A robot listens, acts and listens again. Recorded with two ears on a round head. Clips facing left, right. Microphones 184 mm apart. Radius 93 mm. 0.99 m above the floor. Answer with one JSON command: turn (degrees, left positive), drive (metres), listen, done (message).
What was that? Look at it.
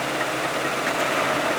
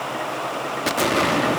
{"turn": -50}
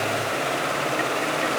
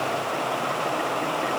{"listen": true}
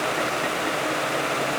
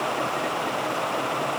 {"done": "I heard an explosion, but can't make it out now. It was about straight ahead or 80° right."}